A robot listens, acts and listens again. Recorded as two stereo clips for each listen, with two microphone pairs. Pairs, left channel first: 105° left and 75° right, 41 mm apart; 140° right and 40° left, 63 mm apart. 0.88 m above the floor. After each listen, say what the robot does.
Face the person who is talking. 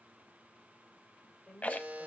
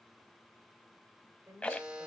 Turn 15° left.
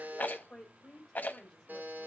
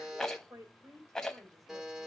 Turn 15° left.
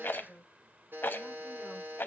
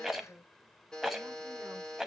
Facing the woman speaking.